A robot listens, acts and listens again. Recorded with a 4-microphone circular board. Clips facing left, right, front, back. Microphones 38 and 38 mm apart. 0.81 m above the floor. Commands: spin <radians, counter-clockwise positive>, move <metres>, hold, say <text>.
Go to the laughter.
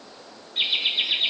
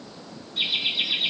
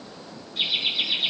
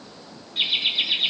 spin 2.36
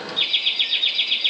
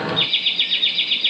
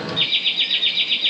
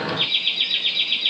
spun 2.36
spin -0.52
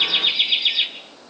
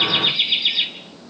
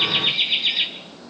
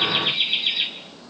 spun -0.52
spin -0.17
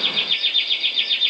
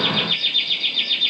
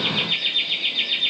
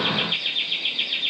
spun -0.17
move 1.0
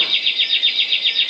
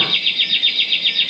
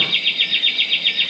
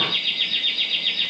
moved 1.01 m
move 1.0
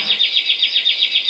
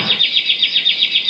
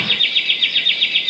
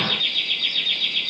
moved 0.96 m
spin -0.17
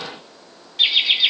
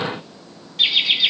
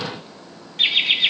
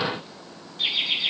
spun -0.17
move 1.0
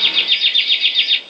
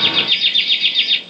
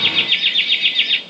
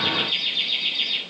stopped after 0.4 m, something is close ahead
say I am next to the laughter.